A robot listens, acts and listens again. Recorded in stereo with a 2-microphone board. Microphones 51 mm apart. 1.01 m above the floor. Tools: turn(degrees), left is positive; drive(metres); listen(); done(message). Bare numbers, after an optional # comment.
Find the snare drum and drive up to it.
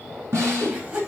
# The snare drum: about 65° right or 115° right.
turn(-65)
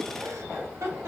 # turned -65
listen()
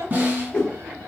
# So it is at 40° right.
turn(-40)
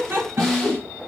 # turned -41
drive(1.0)
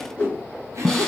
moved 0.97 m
# The snare drum is now 10° left.
turn(10)
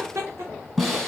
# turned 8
drive(1.0)
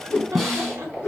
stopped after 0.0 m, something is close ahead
done("I am next to the snare drum.")